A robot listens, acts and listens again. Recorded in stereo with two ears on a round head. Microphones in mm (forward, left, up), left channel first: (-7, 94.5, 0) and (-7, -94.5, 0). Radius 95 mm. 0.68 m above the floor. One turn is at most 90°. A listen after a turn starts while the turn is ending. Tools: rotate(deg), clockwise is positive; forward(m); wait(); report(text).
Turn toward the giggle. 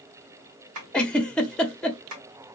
rotate(-30)
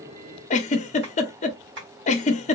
rotate(-90)
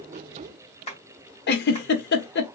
rotate(-55)
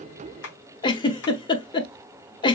rotate(-25)
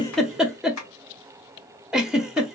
report("Facing the giggle.")